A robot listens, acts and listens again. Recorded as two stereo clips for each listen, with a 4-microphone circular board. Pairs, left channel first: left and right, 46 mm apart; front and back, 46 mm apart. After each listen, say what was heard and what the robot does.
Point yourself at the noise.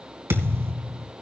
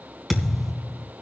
The thud: 95° right. Turn 95° right.
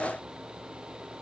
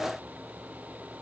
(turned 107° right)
Nothing new. It was at 15° left. Turn 15° left.
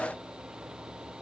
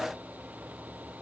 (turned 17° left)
I heard a thud from this way, but can't make it out now.